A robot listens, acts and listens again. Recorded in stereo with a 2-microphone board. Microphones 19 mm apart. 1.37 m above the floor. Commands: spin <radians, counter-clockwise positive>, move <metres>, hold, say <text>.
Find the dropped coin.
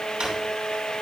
hold
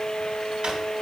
hold
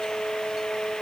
say I can't make out a dropped coin to turn to.